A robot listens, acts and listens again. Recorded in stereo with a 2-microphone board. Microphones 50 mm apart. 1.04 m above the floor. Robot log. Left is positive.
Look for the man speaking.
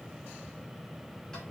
cmd idle
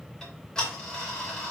cmd idle
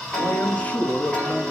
note: The man speaking: about 20° left or 160° left.
cmd yaw +20
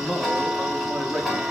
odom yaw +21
note: So it is at 20° right.
cmd yaw -20
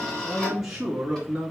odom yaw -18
note: The man speaking is now 15° right.
cmd yaw -15
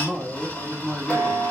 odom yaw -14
end: Facing the man speaking, 2 to 4 m away.